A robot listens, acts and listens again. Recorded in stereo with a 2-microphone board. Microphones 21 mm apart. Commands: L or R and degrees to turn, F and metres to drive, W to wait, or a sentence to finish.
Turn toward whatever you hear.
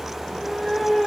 R20
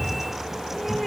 L30
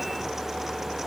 W
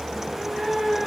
R30
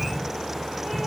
R15
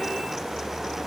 W
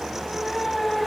Found it: a cat meowing, straight ahead.